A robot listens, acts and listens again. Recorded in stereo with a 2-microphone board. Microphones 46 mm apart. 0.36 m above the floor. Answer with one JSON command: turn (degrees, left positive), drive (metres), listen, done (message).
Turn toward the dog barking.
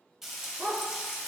{"turn": -60}
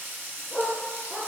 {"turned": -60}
{"turn": 10}
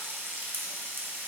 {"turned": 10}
{"listen": true}
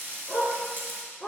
{"done": "Found it: a dog barking, straight ahead."}